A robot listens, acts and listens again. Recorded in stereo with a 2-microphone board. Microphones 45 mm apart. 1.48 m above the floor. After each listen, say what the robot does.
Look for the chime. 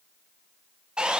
Keep listening.
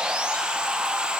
Keep listening.
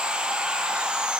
I can't make out a chime to turn to.